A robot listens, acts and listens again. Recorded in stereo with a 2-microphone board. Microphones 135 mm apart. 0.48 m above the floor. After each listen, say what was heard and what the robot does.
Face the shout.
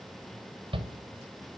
The shout: about 35° right or 145° right. Turn 35° right.
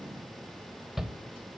Found it: a shout, straight ahead, 1 to 2 m away.